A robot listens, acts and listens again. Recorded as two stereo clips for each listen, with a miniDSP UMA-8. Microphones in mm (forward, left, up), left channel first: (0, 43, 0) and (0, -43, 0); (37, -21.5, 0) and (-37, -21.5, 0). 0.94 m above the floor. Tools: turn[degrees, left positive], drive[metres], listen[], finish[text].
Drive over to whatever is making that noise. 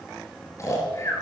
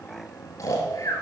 Thought: The snoring: 40° left.
Action: turn[40]
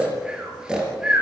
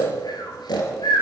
Thought: The snoring is now 10° right.
Action: turn[-10]
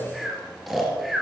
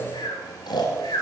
Action: drive[1.0]
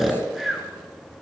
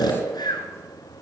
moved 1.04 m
Action: drive[1.0]
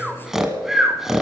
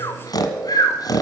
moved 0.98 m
Action: drive[1.0]
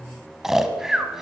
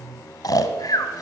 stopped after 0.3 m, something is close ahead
Action: finish[Arrived at the snoring, straight ahead.]